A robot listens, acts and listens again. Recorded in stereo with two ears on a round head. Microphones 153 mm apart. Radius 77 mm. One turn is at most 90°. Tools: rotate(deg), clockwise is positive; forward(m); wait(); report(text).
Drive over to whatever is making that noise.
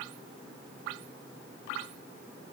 wait()
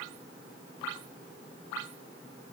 wait()
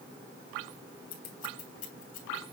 rotate(-50)
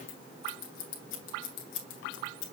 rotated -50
rotate(-75)
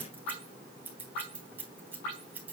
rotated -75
rotate(10)
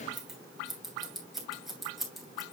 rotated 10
forward(1.0)
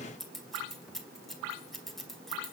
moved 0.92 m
forward(1.0)
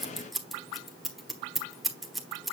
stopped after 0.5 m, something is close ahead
report("I am next to the scissors.")